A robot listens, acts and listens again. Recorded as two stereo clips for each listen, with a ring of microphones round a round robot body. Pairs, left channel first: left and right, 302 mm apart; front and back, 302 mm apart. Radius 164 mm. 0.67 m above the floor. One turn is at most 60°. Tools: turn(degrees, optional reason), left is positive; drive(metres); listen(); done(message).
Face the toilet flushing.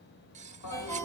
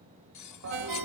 turn(degrees=60, reason="The toilet flushing: 130° left.")
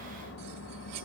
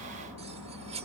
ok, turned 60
turn(degrees=45, reason="The toilet flushing is now 45° left.")
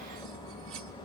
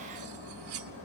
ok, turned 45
turn(degrees=15, reason="The toilet flushing is now 15° left.")
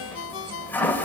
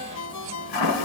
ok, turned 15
done("Facing the toilet flushing.")